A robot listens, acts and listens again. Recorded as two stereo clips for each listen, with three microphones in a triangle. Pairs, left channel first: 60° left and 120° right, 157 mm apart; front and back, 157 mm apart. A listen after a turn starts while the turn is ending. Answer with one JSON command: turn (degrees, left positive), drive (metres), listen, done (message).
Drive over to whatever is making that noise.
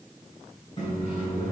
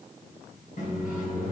{"turn": 15}
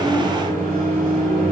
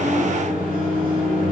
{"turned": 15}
{"drive": 1.0}
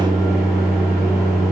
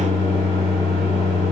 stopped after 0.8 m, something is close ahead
{"done": "I am next to the microwave."}